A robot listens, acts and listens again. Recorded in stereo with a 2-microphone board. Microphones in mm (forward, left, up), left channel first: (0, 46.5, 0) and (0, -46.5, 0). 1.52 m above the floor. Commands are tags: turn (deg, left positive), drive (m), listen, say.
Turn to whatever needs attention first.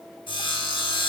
<listen/>
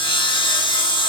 <listen/>
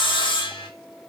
<say>I can't make out anything urgent to turn to.</say>